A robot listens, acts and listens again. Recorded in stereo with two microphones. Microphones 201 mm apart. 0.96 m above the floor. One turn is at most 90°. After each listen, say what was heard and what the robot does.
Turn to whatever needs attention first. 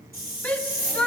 Turn 30° left.
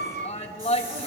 So it is at 145° left. Turn 90° left.
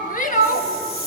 The shout is now 45° left. Turn 45° left.
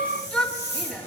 Facing the shout.